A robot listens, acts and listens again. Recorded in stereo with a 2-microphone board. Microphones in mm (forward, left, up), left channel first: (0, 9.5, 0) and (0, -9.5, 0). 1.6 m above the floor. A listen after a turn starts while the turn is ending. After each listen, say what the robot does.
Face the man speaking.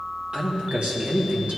Turn 90° right.
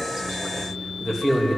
Facing the man speaking.